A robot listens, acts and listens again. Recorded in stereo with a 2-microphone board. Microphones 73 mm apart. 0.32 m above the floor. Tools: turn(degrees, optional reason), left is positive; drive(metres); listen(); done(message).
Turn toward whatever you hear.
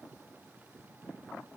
listen()
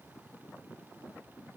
listen()
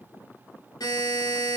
turn(degrees=70, reason="The buzzer: about 70° left or 110° left.")
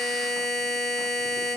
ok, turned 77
done("Found it: a buzzer, straight ahead, 1 to 2 m away.")